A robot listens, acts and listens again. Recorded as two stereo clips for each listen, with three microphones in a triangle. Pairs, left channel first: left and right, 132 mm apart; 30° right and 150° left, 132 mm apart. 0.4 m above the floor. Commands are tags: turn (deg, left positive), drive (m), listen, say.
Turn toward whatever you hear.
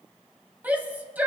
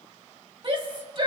<turn deg="-165"/>
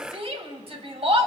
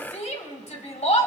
<turn deg="-55"/>
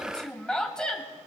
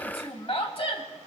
<say>Found it: a shout, straight ahead.</say>